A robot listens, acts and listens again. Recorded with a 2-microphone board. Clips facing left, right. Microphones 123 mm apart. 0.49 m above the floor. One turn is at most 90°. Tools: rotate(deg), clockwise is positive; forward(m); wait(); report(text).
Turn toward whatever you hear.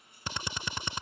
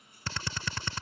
rotate(-20)
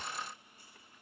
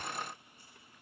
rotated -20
wait()
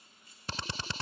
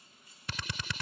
rotate(-90)
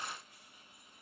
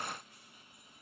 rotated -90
rotate(-55)
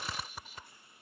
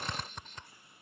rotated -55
report("Found it: a drill, straight ahead.")